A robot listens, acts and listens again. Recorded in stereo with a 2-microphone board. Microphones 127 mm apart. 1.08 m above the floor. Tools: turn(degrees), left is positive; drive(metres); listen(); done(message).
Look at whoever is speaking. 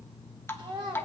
turn(degrees=-40)
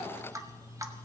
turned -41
listen()
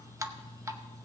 listen()
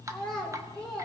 done("Facing the child speaking, 1 to 2 m away.")